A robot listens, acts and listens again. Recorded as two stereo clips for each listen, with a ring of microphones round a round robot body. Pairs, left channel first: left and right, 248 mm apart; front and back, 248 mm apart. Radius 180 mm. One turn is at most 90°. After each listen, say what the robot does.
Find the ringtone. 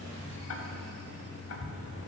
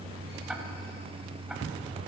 Keep listening.
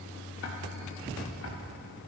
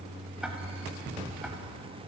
Keep listening.
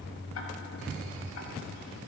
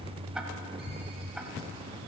I can't make out a ringtone.